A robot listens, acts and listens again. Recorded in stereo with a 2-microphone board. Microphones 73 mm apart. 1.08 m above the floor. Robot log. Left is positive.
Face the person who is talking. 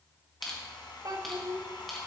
note: The child speaking: about 55° right or 125° right.
cmd yaw -55
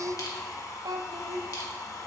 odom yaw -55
note: So it is at 70° right.
cmd yaw -70
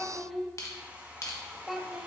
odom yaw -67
end: Found it: a child speaking, straight ahead.